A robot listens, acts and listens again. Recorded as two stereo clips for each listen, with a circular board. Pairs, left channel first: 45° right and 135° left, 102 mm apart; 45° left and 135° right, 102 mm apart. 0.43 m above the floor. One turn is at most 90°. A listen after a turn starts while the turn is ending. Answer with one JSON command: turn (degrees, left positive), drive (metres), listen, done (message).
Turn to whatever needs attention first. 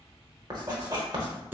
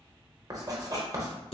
{"listen": true}
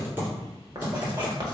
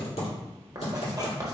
{"listen": true}
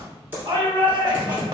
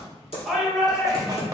{"turn": 90}
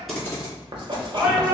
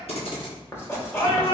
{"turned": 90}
{"turn": 70}
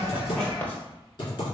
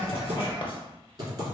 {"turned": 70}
{"listen": true}
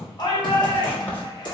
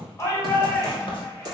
{"turn": -10}
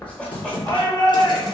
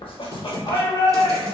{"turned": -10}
{"done": "Facing the shout."}